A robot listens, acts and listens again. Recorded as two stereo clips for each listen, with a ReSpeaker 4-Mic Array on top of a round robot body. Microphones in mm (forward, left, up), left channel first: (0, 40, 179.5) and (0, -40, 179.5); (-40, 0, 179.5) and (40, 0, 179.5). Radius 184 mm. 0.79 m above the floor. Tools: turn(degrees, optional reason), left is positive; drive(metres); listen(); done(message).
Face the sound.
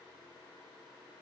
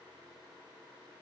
listen()
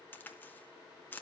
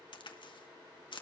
turn(degrees=155, reason="The crack: 155° left.")
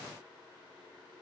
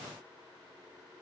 done("I heard a crack from this way, but can't make it out now.")